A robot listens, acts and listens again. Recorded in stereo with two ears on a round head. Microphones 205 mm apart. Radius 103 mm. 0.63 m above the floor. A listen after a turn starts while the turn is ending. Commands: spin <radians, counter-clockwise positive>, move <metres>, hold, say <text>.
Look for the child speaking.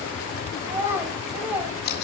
spin -0.52
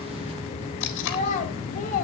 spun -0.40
spin 0.61
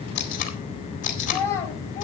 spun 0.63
spin 0.26
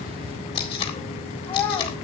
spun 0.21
spin 0.17
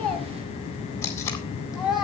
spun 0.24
say Found it: a child speaking, straight ahead, 2 to 4 m away.